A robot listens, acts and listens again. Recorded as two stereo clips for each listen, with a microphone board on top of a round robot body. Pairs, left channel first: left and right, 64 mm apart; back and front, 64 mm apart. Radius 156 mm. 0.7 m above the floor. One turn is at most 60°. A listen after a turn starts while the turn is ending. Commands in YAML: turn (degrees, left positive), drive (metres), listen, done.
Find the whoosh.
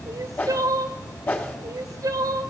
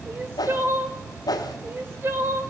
turn: 60
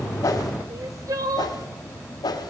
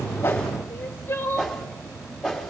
turn: 60
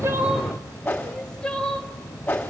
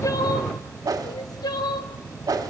turn: 20
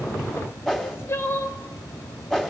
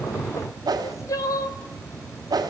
done: "Found it: a whoosh, straight ahead."